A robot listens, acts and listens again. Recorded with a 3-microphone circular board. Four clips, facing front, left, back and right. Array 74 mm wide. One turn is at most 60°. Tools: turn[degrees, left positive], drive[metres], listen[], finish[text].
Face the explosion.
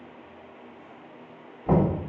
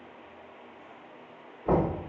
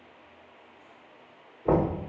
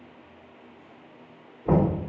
Action: listen[]
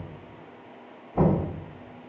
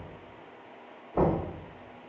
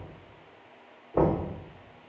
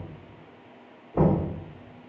Action: listen[]
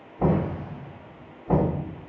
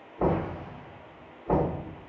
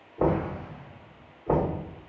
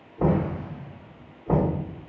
Thought: The explosion: 145° right.
Action: turn[-60]
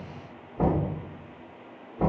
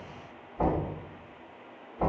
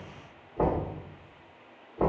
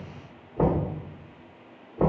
Thought: Nothing new. It was at 85° right.
Action: turn[-60]
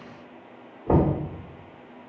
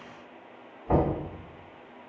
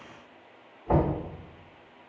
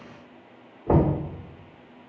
Thought: Nothing new. It was at 25° right.
Action: turn[-25]
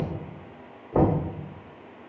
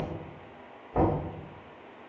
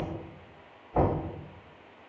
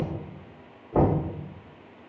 Action: finish[Facing where the explosion came from. I can't hear it now.]